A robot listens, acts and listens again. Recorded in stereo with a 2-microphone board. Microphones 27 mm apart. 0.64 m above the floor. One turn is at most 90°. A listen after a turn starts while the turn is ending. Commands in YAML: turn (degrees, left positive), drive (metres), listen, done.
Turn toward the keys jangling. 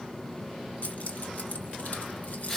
turn: 90
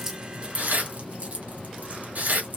turn: -65
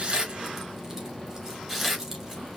listen: true
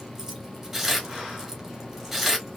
listen: true
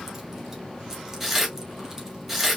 done: "Facing where the keys jangling came from. I can't hear it now."